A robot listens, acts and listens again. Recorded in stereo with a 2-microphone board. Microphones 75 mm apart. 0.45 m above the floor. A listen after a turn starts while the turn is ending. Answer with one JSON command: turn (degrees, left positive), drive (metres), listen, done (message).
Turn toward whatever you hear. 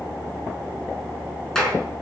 {"turn": 30}
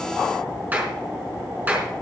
{"turn": -25}
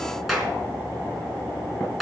{"done": "Found it: a clap, straight ahead."}